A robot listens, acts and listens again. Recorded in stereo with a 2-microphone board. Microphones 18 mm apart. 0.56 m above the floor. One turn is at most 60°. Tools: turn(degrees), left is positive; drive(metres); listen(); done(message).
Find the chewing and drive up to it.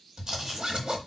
turn(degrees=-40)
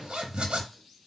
listen()
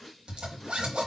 listen()
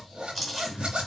drive(metres=1.0)
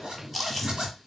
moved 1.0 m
turn(degrees=-10)
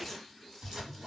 drive(metres=1.0)
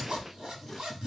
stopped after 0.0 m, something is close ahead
listen()
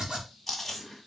done("I am next to the chewing.")